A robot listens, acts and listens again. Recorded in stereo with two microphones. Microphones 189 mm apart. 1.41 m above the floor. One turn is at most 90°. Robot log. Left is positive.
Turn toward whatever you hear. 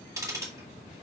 note: The ticking: about 15° right or 165° right.
cmd yaw -15
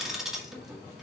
end: Facing the ticking.